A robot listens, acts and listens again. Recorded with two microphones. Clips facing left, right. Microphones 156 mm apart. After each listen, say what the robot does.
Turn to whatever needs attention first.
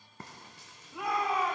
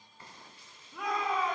Turn 30° left.
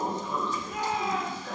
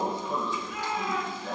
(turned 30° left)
Turn 140° left.
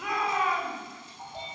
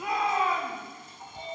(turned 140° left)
Turn 30° right.
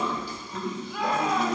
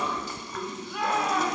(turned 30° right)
Facing the shout, 2 to 4 m away.